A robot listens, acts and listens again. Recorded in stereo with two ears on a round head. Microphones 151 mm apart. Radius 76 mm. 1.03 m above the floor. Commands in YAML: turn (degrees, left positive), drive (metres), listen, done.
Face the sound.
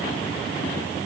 listen: true
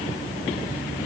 listen: true
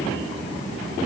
done: "I can't make out anything."